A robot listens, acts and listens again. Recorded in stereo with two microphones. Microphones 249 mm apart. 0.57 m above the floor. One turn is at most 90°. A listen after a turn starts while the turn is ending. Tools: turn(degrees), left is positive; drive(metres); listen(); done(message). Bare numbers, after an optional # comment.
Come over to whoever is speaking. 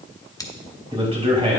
# The man speaking: about 25° right or 155° right.
turn(-25)
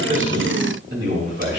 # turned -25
# So it is at 130° right.
turn(-90)
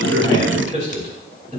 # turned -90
# The man speaking is now 30° right.
turn(-30)
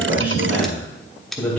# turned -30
drive(1.0)
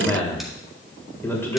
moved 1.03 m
# The man speaking is now 10° left.
turn(10)
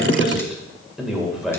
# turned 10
drive(1.0)
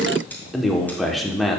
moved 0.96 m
drive(1.0)
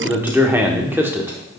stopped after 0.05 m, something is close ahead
# The man speaking is now 10° right.
turn(-10)
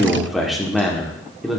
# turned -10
done("Arrived at the man speaking, straight ahead.")